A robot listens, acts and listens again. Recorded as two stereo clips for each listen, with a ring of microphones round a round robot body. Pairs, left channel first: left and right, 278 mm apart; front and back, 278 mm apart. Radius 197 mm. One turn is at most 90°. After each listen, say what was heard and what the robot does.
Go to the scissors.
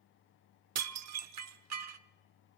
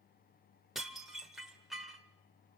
Keep listening.
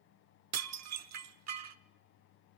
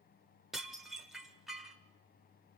Keep listening.
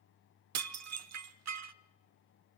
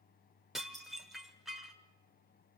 I can't make out scissors to turn to.